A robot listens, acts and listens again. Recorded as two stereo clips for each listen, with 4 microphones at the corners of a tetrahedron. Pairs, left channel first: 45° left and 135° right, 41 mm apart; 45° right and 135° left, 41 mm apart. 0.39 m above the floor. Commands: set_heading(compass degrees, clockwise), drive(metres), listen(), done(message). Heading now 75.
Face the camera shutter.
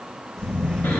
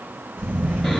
set_heading(315)
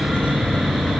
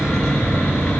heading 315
set_heading(275)
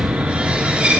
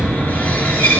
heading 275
set_heading(285)
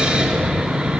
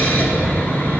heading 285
done("Facing the camera shutter.")